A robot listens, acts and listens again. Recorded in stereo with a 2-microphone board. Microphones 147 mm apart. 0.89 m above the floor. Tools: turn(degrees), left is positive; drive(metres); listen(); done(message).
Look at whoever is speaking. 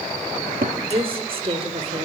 turn(degrees=-40)
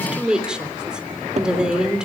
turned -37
done("Found it: a woman speaking, straight ahead, 2 to 4 m away.")